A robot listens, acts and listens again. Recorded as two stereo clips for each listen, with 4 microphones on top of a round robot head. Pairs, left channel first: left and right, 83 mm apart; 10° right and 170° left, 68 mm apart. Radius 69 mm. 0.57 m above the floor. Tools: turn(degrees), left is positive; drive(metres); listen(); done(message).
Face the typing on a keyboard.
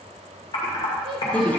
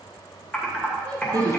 turn(degrees=55)
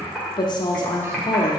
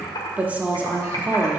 done("Found it: typing on a keyboard, straight ahead, 2 to 4 m away.")